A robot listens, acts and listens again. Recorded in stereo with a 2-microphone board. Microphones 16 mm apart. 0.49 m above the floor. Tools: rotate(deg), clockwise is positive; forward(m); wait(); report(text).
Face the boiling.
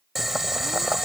rotate(30)
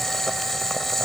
rotate(-20)
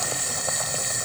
report("Facing the boiling.")